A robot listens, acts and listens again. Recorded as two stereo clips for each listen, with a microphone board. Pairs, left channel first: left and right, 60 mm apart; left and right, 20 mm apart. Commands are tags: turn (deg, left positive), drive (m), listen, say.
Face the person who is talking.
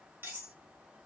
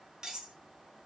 <listen/>
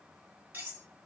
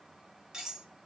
<listen/>
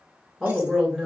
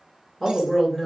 <turn deg="30"/>
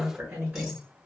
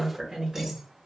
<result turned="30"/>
<turn deg="-25"/>
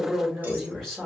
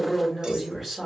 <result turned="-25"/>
<say>Found it: a woman speaking, straight ahead.</say>